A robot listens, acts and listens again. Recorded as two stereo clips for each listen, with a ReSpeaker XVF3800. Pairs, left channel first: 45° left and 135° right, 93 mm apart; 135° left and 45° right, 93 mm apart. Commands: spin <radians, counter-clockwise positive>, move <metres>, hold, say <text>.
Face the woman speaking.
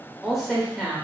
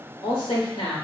spin 2.44
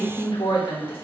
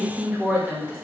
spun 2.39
spin 0.61
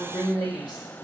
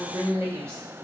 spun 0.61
spin 0.17
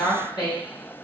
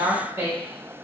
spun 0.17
spin 0.26
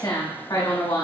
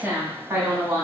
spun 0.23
spin 0.17
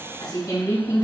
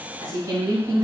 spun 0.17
say Facing the woman speaking, 1 to 2 m away.